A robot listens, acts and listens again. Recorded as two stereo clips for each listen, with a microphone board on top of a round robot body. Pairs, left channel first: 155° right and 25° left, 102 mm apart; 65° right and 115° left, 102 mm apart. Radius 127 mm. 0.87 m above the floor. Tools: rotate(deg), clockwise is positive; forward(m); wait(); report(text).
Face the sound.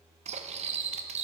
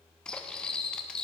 rotate(-15)
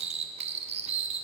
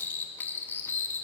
report("Facing the cutlery clinking.")